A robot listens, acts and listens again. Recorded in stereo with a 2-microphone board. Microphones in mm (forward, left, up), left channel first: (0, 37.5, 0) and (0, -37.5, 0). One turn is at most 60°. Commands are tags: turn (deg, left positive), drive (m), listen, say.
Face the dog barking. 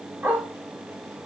<turn deg="-30"/>
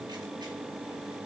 <listen/>
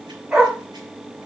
<turn deg="-15"/>
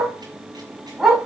<say>Facing the dog barking.</say>